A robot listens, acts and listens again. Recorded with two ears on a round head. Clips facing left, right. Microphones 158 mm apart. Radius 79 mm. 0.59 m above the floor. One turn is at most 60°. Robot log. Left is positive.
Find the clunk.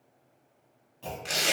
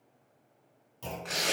note: The clunk: about 60° right or 120° right.
cmd yaw -60
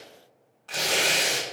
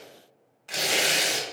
cmd idle
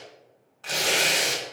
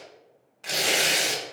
end: I heard a clunk, but can't make it out now. It was about straight ahead or 60° right.